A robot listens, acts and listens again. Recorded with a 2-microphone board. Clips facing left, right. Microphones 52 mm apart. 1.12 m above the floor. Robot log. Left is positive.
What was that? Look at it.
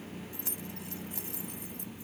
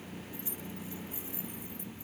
note: The keys jangling: about 75° left or 105° left.
cmd yaw +75
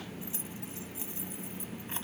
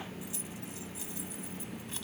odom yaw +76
note: So it is at 30° left.
cmd yaw +30
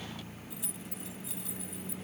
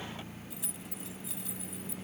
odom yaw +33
end: Found it: keys jangling, straight ahead.